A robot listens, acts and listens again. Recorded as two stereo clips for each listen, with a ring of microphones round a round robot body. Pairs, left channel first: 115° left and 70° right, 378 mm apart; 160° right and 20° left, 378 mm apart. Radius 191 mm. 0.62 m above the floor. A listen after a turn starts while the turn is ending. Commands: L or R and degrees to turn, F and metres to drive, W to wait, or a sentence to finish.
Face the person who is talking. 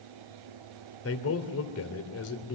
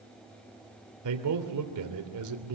L60
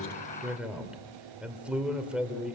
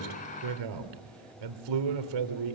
L20
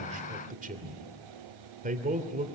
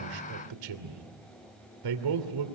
Facing the man speaking, 2 to 4 m away.